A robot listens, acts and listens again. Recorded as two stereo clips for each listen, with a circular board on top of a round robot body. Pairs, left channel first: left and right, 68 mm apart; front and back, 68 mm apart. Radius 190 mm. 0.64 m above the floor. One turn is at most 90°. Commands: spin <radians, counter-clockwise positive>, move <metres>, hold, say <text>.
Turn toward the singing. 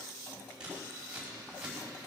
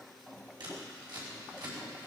hold
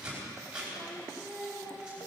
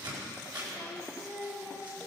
spin 1.57
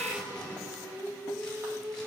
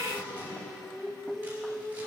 spin 0.70
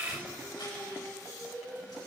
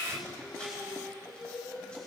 say Found it: singing, straight ahead.